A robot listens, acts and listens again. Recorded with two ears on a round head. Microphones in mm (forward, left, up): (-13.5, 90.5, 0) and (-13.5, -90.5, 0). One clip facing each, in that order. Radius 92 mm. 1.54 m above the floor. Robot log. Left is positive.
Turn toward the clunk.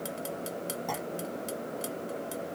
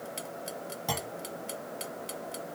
note: The clunk: about 45° right or 135° right.
cmd yaw -45
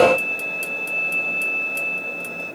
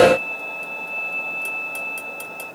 cmd idle
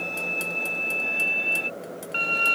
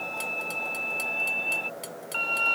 end: I heard a clunk, but can't make it out now. It was about straight ahead or 90° right.